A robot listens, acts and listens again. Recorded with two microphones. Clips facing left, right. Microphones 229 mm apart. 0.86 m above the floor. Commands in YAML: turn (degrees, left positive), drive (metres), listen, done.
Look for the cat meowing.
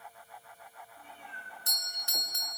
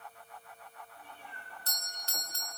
turn: 20
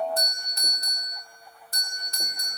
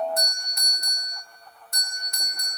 listen: true
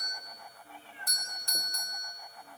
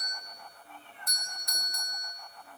turn: 30
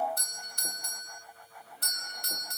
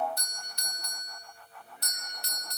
listen: true
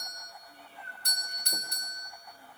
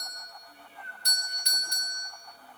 turn: -15
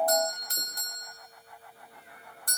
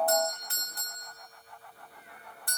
listen: true
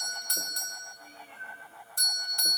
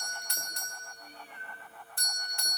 done: "Facing the cat meowing, over 4 m away."